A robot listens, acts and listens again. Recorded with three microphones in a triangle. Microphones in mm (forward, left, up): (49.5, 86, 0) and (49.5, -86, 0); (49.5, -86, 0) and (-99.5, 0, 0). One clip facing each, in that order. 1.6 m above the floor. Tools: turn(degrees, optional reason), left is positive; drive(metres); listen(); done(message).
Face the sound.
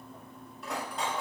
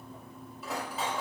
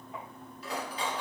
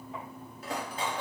turn(degrees=-175, reason="The cutlery clinking: 175° right.")
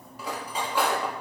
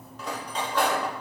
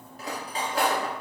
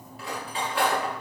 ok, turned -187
turn(degrees=10, reason="The cutlery clinking is now 10° left.")
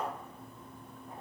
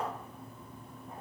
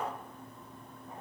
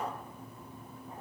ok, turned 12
listen()
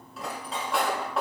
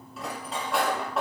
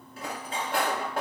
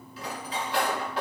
done("Found it: cutlery clinking, straight ahead, 1 to 2 m away.")